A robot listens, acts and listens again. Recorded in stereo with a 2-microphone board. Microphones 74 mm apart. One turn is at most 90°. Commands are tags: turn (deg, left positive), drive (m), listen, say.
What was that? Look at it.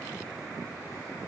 <listen/>
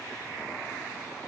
<listen/>
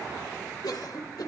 <turn deg="65"/>
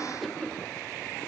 <say>Facing the cough, 2 to 4 m away.</say>